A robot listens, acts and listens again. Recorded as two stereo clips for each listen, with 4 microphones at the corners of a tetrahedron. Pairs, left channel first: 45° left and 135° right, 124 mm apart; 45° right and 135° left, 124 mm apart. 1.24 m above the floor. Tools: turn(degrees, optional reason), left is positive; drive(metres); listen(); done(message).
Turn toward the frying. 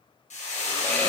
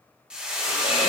turn(degrees=55, reason="The frying: 55° left.")
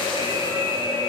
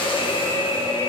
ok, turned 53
listen()
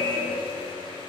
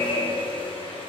listen()
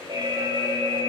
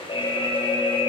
done("Facing where the frying came from. I can't hear it now.")